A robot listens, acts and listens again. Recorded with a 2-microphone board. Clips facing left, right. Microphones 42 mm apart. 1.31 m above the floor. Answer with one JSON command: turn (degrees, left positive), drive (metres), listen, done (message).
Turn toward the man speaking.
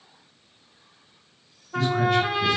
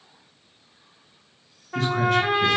{"turn": -60}
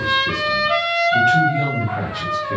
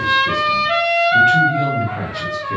{"done": "Facing the man speaking, 1 to 2 m away."}